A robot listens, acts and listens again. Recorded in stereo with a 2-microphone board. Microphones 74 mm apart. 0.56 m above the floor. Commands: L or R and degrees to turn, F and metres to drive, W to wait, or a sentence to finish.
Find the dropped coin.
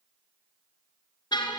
W
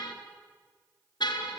W
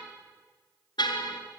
I can't make out a dropped coin to turn to.